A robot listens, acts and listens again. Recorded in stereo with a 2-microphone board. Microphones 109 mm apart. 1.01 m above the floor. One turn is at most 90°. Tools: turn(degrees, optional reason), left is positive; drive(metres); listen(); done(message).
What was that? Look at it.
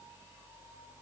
listen()
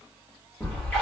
turn(degrees=30)
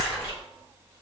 turn(degrees=-20, reason="So it is at 20° right.")
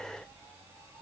done("Facing where the splash came from. I can't hear it now.")